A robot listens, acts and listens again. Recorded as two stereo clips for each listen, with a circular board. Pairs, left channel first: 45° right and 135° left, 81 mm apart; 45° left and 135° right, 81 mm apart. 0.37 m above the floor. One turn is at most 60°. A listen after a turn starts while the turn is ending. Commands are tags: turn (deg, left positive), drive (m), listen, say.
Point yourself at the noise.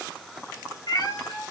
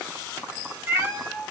<turn deg="-60"/>
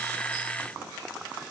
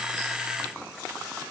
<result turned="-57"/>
<turn deg="-30"/>
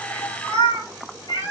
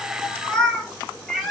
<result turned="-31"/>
<turn deg="-50"/>
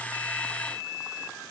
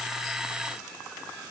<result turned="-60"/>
<turn deg="10"/>
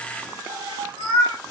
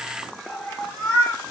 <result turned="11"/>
<turn deg="-20"/>
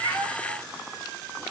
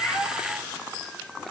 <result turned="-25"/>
<listen/>
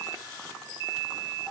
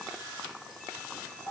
<listen/>
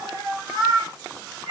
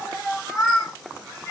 <say>Found it: a cat meowing, straight ahead.</say>